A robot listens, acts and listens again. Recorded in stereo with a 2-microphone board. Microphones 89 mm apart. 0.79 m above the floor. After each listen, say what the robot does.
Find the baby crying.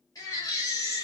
Turn 40° left.
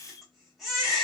Facing the baby crying, 1 to 2 m away.